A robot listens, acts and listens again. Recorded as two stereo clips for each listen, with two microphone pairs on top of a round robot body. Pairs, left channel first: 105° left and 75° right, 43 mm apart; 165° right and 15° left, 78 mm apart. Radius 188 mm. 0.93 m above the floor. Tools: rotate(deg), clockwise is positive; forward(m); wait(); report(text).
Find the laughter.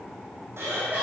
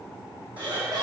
rotate(25)
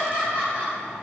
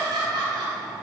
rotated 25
rotate(20)
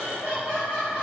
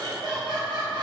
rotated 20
rotate(10)
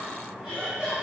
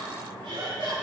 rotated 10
report("Facing the laughter.")